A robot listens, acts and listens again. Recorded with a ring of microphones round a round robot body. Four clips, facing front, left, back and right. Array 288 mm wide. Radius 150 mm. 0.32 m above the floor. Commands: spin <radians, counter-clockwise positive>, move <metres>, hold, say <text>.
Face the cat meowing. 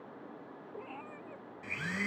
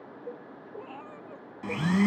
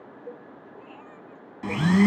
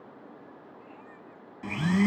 spin 1.31
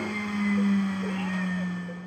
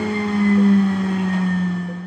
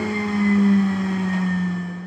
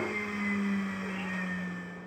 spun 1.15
hold
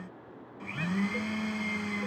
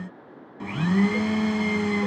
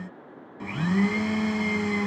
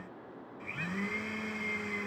hold
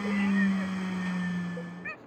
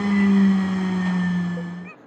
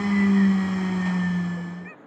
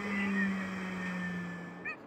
spin 0.17
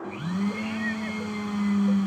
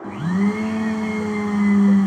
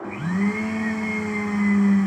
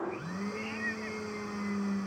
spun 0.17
hold
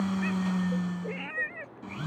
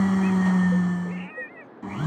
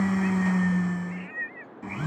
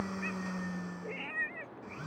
say Facing the cat meowing.